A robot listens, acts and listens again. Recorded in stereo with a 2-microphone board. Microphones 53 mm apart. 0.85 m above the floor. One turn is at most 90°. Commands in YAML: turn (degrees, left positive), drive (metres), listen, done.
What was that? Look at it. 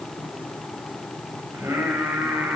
turn: -90
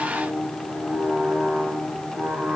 turn: -20
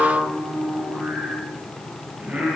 turn: -15
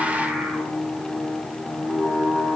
turn: -10
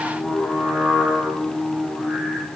done: "Facing the singing."